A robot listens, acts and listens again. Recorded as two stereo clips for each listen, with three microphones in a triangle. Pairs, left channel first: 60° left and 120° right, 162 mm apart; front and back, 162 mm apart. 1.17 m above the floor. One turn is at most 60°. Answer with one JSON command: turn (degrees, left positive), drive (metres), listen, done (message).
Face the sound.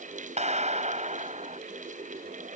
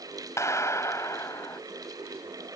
{"turn": -60}
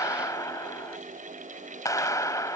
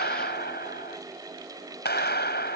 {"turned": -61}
{"turn": -10}
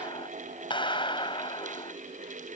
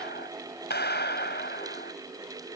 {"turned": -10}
{"done": "Facing the clap."}